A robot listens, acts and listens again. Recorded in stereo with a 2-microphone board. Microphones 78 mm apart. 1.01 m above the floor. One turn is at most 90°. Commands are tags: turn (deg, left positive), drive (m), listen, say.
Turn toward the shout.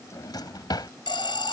<listen/>
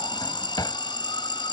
<listen/>
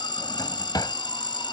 <say>I can't make out a shout to turn to.</say>